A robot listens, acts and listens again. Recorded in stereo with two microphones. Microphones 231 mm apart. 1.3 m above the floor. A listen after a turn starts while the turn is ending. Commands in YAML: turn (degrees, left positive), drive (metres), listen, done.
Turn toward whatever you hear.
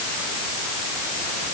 listen: true
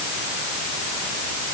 listen: true
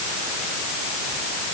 done: "I can't make out anything."